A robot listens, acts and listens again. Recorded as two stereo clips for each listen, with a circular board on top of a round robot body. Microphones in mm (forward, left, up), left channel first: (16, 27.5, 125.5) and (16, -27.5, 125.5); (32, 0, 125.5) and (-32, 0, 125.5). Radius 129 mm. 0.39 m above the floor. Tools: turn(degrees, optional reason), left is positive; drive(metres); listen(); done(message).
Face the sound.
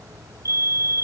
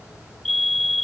turn(degrees=-90, reason="The fire alarm: 90° right.")
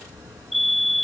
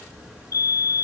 done("Facing the fire alarm.")